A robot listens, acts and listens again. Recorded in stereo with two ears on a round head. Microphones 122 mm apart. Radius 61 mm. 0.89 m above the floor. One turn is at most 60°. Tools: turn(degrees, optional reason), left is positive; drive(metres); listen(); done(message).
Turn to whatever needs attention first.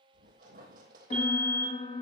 turn(degrees=-45, reason="The fire alarm: about 45° right or 135° right.")
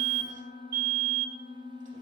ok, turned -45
turn(degrees=-60, reason="So it is at 90° right.")
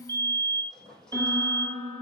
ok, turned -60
turn(degrees=-30, reason="The fire alarm is now 30° right.")
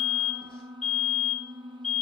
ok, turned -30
done("Facing the fire alarm, over 4 m away.")